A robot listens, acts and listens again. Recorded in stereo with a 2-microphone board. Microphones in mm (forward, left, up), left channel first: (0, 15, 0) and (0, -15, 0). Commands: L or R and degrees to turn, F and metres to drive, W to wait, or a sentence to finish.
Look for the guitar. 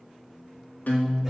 L90
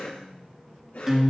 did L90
Facing the guitar.